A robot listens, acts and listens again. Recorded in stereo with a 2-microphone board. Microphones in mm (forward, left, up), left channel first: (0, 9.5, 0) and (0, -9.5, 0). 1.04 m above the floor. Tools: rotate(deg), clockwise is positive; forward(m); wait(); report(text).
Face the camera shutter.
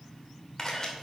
rotate(-25)
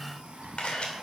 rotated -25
rotate(-130)
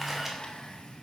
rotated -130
wait()
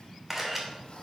rotate(10)
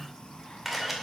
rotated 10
report("Facing the camera shutter, 2 to 4 m away.")